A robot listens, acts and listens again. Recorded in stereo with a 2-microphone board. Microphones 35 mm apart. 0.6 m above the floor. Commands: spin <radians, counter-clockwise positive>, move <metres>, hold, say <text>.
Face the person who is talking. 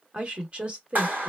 spin -0.61
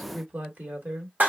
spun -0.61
spin -1.92
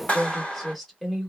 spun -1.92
say Facing the woman speaking, 1 to 2 m away.